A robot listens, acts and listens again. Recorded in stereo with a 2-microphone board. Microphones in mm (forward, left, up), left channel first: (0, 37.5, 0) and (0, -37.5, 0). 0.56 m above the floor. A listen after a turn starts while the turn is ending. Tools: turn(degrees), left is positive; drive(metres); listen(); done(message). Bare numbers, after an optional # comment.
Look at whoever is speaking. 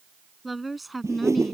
turn(30)
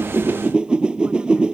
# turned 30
listen()
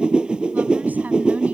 listen()
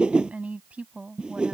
# So it is at 15° right.
turn(-15)
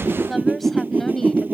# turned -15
done("Found it: a woman speaking, straight ahead.")